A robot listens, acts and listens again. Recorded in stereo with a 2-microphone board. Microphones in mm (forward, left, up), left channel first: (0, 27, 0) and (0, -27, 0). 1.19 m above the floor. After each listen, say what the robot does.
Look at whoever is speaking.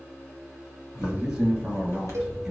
Turn 30° right.
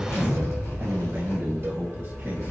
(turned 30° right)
Keep listening.
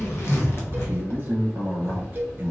Turn 145° right.
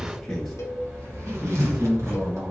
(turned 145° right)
Found it: a man speaking, straight ahead.